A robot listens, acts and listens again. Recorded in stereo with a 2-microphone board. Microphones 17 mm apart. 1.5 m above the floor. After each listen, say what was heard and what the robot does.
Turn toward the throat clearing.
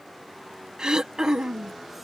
The throat clearing: about 50° right or 130° right. Turn 50° right.
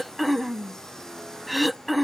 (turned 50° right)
Found it: throat clearing, straight ahead.